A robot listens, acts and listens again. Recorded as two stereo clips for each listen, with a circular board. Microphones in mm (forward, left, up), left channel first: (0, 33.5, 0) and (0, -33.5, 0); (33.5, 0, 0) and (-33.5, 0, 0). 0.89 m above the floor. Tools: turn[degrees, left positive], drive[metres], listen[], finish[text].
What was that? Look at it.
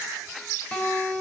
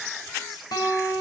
Thought: The guitar: 15° left.
Action: turn[15]
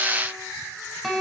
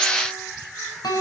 Action: finish[Found it: a guitar, straight ahead, 2 to 4 m away.]